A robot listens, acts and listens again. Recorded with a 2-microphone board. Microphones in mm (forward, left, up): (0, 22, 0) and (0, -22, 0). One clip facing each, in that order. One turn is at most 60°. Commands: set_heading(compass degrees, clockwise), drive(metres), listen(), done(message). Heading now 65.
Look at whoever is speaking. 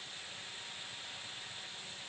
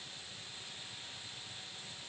listen()
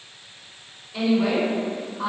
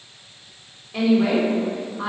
set_heading(120)
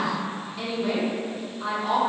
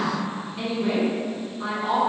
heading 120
set_heading(140)
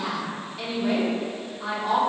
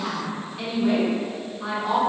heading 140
done("Found it: a woman speaking, straight ahead, 1 to 2 m away.")